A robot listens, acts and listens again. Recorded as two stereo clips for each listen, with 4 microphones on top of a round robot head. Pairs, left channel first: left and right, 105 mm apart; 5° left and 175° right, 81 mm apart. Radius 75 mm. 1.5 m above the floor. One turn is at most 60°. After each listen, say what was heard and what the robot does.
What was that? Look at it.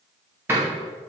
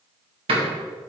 The door slam: 165° right. Turn 60° right.
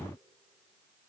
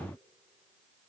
Nothing new. It was at 105° right. Turn 60° right.
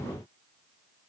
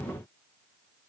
Nothing new. It was at 45° right. Turn 45° right.
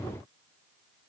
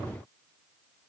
I heard a door slam from this way, but can't make it out now.